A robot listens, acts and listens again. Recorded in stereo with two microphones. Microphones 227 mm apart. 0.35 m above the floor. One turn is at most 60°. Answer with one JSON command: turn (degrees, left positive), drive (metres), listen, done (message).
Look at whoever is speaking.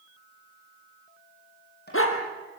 {"listen": true}
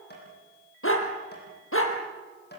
{"listen": true}
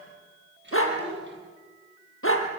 {"turn": -50}
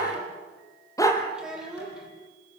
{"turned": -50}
{"done": "Facing the child speaking."}